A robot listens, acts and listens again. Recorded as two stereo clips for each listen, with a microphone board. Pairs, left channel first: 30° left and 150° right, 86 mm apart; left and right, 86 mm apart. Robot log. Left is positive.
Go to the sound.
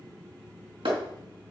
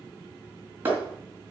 note: The clap: 155° right.
cmd yaw -155
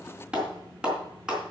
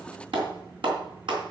note: The clap is now 70° right.
cmd yaw -70
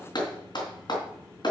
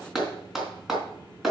cmd fwd 1.0
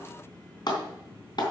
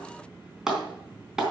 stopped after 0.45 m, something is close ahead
end: Something is in my way. I am facing the clap but have not reached it.